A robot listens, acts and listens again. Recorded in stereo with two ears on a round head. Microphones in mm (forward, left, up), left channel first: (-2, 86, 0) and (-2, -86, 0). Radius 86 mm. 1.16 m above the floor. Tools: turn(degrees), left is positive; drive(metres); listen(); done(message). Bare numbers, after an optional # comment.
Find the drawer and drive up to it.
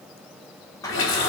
# The drawer: about 15° left or 165° left.
turn(15)
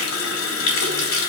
listen()
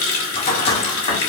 # So it is at 150° left.
turn(150)
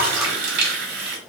listen()
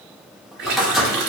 drive(1.0)
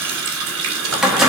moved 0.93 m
drive(1.0)
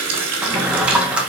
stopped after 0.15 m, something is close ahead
done("I am next to the drawer.")